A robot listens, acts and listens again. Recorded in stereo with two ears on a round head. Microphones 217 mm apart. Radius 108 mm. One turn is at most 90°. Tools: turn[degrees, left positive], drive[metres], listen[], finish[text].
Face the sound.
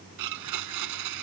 Action: turn[-90]
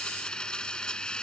Action: finish[Facing the blender.]